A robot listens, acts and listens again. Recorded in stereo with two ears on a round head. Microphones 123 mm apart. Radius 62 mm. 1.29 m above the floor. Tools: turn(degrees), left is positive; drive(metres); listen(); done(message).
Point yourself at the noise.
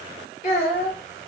turn(degrees=50)
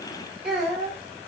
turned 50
done("Facing the child speaking.")